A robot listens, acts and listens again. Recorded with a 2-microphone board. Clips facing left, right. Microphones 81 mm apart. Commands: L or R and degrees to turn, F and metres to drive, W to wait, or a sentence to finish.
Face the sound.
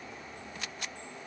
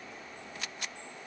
W
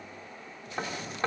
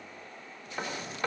L30
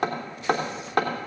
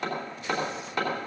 L120
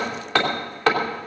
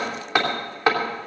R15
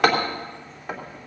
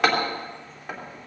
Facing the hammering, 2 to 4 m away.